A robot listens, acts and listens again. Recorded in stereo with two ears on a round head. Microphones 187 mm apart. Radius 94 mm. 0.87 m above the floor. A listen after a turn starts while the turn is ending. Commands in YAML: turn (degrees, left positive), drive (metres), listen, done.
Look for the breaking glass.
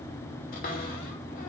listen: true
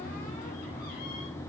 listen: true
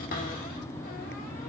done: "I can't make out breaking glass, only a cupboard door."